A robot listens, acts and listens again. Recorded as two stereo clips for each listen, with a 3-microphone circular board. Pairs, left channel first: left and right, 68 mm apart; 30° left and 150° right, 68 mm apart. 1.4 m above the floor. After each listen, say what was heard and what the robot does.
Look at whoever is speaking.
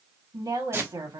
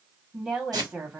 The woman speaking: 75° right. Turn 75° right.
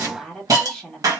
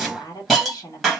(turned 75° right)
Found it: a woman speaking, straight ahead.